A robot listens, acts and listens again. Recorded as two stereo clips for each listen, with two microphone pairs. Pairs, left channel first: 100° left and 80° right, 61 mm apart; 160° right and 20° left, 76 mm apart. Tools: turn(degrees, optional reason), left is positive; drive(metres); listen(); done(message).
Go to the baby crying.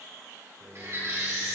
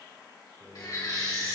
turn(degrees=-130, reason="The baby crying: 130° right.")
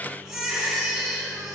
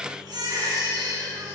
drive(metres=1.0)
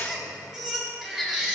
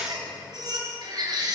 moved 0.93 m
drive(metres=1.0)
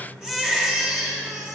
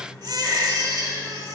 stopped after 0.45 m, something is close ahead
done("Arrived at the baby crying, straight ahead.")